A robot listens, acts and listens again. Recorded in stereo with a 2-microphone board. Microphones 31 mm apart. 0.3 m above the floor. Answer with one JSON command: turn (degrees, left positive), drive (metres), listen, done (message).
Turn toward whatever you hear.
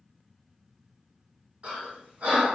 {"turn": -50}
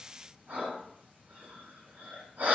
{"turn": -80}
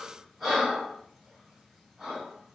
{"done": "Found it: breathing, straight ahead, 1 to 2 m away."}